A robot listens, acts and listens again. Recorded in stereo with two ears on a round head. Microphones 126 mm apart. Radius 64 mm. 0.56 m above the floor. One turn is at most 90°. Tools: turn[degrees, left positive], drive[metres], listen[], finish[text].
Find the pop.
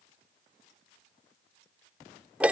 Action: listen[]
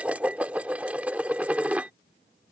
Action: listen[]
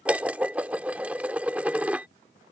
Action: finish[I can't make out a pop, only dishes clattering.]